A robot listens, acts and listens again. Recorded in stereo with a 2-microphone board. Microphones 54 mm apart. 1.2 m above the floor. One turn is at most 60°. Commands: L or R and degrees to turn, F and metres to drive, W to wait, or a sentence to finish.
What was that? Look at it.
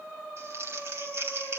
R55
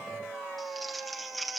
Facing the crumpling.